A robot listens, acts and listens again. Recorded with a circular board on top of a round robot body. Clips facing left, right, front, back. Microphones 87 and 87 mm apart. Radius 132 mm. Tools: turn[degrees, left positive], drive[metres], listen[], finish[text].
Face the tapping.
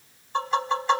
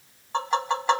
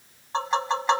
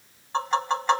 Thought: The tapping: 85° right.
Action: turn[-85]
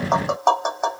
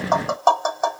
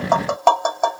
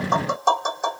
Action: finish[Found it: tapping, straight ahead, 2 to 4 m away.]